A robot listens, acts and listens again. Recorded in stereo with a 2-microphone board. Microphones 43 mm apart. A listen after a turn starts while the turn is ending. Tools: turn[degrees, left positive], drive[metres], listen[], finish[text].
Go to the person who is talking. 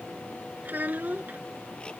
Thought: The child speaking: about 40° right or 140° right.
Action: turn[-40]
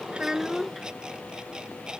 Action: drive[1.0]
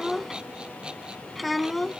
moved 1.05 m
Action: drive[1.0]
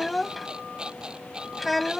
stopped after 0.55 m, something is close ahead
Action: finish[I am next to the child speaking.]